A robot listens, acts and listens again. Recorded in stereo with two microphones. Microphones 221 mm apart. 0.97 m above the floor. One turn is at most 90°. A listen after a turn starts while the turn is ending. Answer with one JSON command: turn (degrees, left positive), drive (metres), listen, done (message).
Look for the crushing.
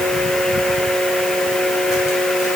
{"listen": true}
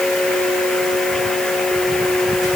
{"listen": true}
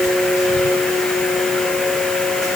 {"done": "I can't make out crushing to turn to."}